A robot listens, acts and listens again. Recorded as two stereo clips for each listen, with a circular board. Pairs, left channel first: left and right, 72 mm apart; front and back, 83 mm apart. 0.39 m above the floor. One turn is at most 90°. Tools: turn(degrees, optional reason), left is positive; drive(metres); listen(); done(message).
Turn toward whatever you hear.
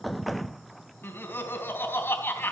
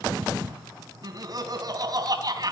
turn(degrees=90, reason="The laughter: 145° left.")
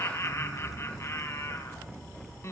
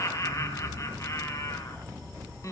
turn(degrees=45, reason="The laughter is now 45° left.")
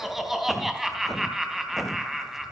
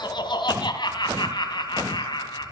done("Facing the laughter, 2 to 4 m away.")